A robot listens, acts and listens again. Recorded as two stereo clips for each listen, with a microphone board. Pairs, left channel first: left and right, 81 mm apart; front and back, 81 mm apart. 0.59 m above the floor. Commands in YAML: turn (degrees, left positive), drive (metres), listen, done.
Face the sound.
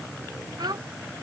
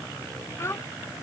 turn: -55
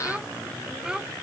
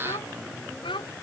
turn: -10
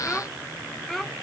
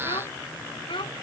done: "Found it: a child speaking, straight ahead."